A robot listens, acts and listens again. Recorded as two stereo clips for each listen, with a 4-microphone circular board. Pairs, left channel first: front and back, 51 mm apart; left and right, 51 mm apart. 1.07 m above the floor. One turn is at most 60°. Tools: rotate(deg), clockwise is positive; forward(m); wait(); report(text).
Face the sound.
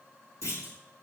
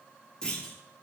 rotate(-15)
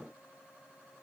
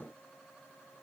report("I heard a clunk from this way, but can't make it out now.")